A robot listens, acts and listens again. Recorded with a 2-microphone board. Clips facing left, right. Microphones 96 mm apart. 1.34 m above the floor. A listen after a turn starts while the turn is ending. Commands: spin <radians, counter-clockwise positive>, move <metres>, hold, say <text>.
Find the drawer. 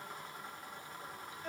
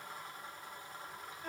hold
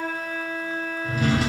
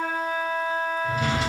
spin 0.52
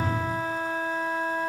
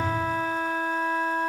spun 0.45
hold
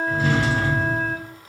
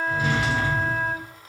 spin -0.35
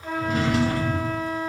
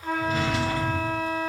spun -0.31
say Found it: a drawer, straight ahead.